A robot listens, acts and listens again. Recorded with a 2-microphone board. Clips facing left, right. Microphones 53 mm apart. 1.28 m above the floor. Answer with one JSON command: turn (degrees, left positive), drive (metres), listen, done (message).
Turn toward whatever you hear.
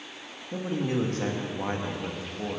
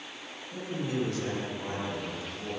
{"turn": 40}
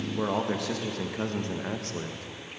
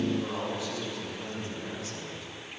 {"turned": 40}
{"turn": 125}
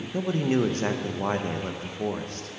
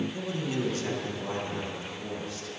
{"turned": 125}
{"turn": 55}
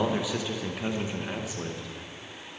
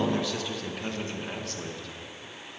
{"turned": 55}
{"turn": 15}
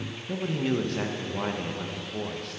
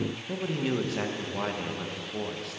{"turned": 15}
{"done": "Facing the man speaking."}